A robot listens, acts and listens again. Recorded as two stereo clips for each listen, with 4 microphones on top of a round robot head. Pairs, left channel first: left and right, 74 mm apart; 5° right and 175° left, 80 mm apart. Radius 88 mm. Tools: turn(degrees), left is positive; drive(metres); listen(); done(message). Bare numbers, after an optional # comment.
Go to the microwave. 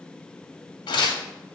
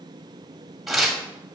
listen()
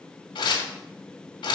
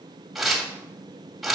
listen()
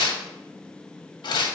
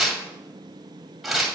done("I can't make out a microwave to turn to.")